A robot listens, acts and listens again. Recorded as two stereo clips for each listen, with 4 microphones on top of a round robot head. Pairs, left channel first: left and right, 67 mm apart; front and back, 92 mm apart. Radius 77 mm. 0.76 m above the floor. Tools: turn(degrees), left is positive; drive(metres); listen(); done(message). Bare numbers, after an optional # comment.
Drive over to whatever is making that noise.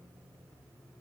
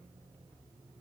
listen()
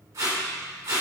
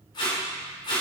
# The tape being pulled: 45° right.
turn(-45)
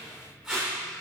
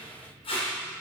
# The tape being pulled is now 10° right.
turn(-10)
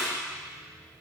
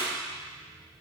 drive(1.0)
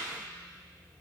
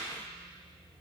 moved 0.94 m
listen()
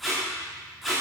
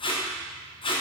drive(1.0)
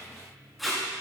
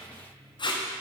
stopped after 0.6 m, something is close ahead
done("I am next to the tape being pulled.")